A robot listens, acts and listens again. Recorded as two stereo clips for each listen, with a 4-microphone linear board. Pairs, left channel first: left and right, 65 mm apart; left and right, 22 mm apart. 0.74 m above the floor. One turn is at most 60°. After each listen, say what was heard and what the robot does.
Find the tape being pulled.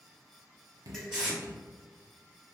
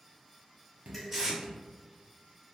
Turn 30° right.
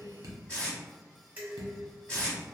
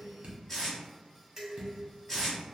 So it is at 20° left. Turn 20° left.
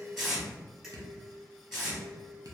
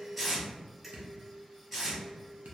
Facing the tape being pulled.